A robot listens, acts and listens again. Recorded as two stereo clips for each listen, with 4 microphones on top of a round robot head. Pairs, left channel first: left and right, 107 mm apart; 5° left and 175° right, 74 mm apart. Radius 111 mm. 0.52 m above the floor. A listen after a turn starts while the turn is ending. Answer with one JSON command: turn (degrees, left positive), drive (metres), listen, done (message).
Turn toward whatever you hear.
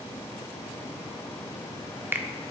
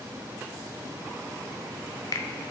{"turn": -20}
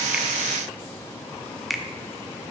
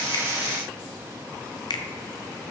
{"done": "Found it: a finger snap, straight ahead."}